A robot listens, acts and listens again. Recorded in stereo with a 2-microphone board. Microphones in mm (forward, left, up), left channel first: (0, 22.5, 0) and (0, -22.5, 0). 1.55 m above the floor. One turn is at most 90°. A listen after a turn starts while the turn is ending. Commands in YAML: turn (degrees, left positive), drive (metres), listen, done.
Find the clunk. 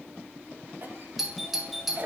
listen: true
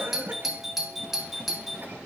listen: true
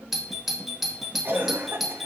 done: "I can't make out a clunk, only a cough and a doorbell."